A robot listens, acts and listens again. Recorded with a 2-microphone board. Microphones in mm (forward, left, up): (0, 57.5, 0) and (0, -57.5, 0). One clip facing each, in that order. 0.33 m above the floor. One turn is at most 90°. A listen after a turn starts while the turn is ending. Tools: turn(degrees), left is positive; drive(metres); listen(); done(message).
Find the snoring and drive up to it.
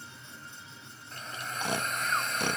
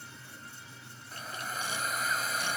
turn(degrees=65)
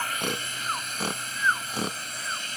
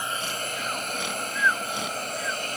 turn(degrees=40)
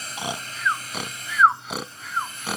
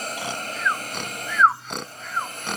drive(metres=1.0)
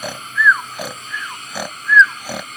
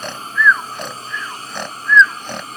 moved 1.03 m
turn(degrees=10)
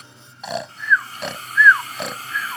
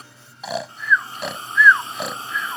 drive(metres=1.0)
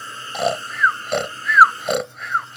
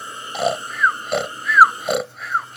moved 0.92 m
drive(metres=1.0)
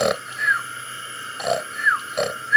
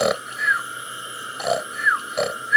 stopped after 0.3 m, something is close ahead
done("I am next to the snoring.")